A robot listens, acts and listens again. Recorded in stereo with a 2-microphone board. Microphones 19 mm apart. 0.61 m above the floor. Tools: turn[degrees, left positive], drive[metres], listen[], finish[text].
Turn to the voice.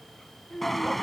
Thought: The child speaking: about 20° left or 160° left.
Action: turn[20]
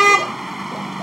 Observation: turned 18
Action: listen[]
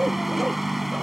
Action: listen[]
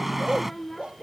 Action: turn[30]
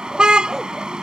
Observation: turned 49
Action: listen[]
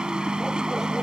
Action: listen[]
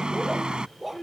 Thought: So it is at 135° left.
Action: turn[135]
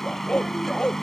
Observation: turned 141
Action: listen[]
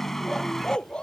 Action: listen[]
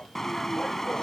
Action: finish[I heard a child speaking from this way, but can't make it out now.]